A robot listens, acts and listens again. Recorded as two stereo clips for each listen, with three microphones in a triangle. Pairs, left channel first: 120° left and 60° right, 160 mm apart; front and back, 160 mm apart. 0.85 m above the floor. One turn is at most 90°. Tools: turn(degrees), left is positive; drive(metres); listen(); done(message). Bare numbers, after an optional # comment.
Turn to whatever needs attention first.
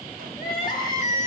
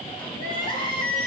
# The crying: 60° left.
turn(60)
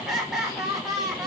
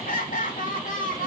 # The crying is now 30° left.
turn(30)
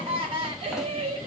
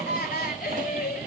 done("Found it: crying, straight ahead, 2 to 4 m away.")